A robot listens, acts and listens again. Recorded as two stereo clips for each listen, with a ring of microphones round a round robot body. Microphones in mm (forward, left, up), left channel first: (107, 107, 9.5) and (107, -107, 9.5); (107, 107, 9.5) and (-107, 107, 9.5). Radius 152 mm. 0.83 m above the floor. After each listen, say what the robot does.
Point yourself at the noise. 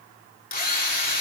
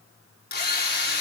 Turn 45° left.
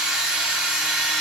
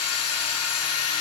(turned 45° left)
Found it: a drill, straight ahead, over 4 m away.